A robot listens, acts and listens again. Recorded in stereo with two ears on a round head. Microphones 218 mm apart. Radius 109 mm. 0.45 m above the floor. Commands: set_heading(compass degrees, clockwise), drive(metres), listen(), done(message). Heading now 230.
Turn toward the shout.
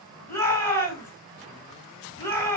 set_heading(200)
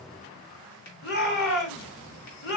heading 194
set_heading(59)
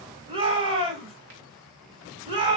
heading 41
set_heading(66)
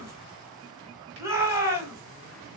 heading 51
set_heading(61)
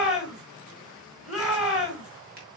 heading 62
done("Found it: a shout, straight ahead, 2 to 4 m away.")